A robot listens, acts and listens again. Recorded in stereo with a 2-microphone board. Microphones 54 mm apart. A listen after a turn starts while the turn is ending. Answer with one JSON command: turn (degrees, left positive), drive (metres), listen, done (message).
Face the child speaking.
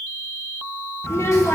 {"turn": 60}
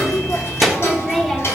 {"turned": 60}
{"done": "Found it: a child speaking, straight ahead."}